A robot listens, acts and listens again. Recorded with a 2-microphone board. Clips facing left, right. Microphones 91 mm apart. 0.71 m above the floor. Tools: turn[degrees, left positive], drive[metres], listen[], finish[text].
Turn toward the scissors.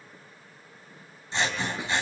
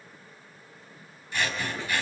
Thought: The scissors: about 25° left or 155° left.
Action: turn[25]
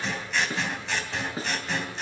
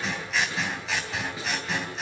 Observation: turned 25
Action: finish[Found it: scissors, straight ahead, 2 to 4 m away.]